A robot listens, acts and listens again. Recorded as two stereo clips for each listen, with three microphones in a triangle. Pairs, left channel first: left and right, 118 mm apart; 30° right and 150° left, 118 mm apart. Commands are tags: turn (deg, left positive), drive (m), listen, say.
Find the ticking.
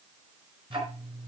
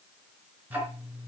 <turn deg="-135"/>
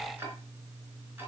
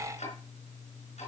<turn deg="-20"/>
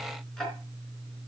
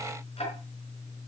<say>Found it: ticking, straight ahead.</say>